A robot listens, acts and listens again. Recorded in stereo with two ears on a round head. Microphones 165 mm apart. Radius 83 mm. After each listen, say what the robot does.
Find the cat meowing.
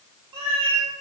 Turn 35° right.
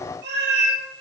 Turn 105° right.
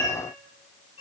Turn 20° left.
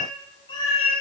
Turn 35° left.
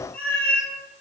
Turn 15° left.
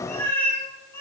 Turn 15° left.
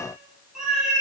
Found it: a cat meowing, straight ahead.